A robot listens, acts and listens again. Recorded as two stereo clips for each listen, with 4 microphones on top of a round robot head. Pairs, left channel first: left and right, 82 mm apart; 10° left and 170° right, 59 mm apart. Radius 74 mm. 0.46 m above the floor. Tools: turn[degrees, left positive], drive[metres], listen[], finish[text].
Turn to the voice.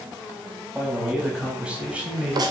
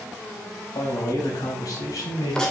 Thought: The man speaking: 20° right.
Action: turn[-20]
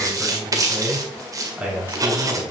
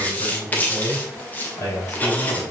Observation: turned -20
Thought: The man speaking is now 20° right.
Action: turn[-20]
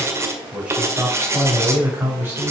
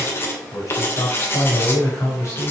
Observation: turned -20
Thought: The man speaking is now 25° right.
Action: turn[-25]
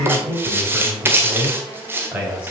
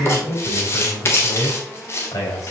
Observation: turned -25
Thought: The man speaking is now 15° right.
Action: turn[-15]
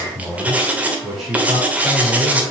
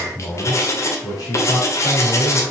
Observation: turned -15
Action: finish[Facing the man speaking.]